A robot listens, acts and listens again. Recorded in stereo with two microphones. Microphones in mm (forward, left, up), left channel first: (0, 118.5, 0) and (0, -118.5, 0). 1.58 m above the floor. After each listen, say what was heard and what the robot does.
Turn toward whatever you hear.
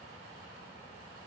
Keep listening.
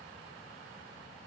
Keep listening.
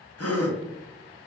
The gasp: about 70° left or 110° left. Turn 70° left.
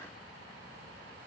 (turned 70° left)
Keep listening.
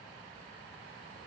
I heard a gasp, but can't make it out now. It was about straight ahead or 40° left.